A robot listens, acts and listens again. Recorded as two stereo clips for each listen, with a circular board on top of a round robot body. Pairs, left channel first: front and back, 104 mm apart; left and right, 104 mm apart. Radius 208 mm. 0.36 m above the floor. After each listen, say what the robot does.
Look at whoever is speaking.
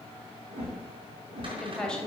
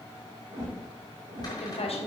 Turn 80° left.
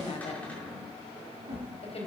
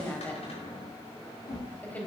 Turn 15° left.
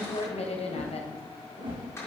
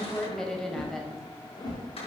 Found it: a woman speaking, straight ahead.